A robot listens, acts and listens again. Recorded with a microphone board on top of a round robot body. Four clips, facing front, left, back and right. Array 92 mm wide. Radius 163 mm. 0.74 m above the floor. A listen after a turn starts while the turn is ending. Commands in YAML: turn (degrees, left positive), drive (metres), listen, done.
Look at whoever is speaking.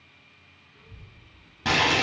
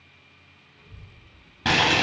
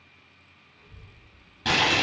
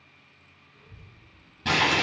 turn: -25
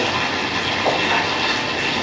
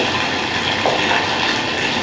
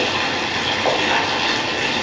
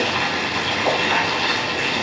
listen: true
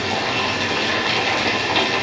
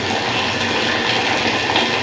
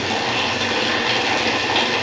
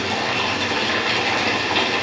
listen: true
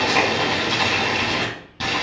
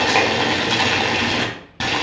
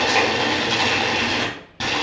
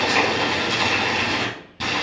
done: "Facing the child speaking."